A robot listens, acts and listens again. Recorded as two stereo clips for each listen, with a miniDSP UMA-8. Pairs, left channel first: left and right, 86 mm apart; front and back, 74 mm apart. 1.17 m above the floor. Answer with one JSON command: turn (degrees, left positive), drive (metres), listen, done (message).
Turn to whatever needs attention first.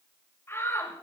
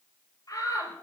{"turn": 30}
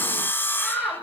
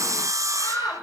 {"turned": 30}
{"done": "Found it: a shout, straight ahead, over 4 m away."}